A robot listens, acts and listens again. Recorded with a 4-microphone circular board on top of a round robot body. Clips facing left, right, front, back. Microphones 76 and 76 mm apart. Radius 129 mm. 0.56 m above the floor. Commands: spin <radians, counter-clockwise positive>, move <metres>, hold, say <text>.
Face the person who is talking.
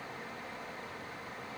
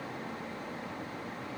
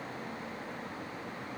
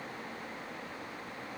hold
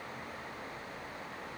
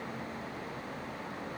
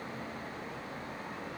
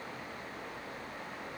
hold
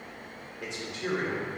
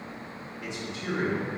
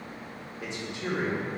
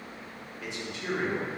spin 1.13
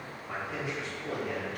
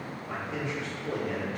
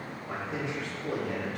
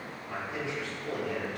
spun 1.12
say Found it: a man speaking, straight ahead.